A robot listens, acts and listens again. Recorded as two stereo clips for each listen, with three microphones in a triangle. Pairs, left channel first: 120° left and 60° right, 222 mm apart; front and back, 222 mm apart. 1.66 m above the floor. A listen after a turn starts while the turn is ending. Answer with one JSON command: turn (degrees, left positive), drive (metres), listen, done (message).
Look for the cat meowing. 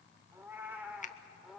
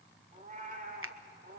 {"turn": -150}
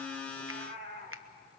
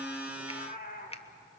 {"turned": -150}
{"turn": -40}
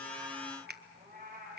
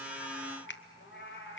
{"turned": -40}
{"turn": -20}
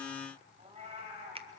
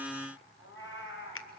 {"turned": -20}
{"done": "Found it: a cat meowing, straight ahead, 2 to 4 m away."}